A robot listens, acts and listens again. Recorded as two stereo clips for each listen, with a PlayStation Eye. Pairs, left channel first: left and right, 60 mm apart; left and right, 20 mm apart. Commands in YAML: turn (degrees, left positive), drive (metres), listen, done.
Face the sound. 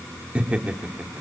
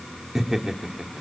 turn: -25
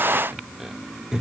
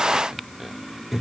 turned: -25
turn: -30
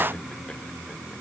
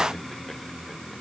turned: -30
listen: true
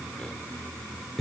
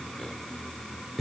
done: "Found it: laughter, straight ahead, 2 to 4 m away."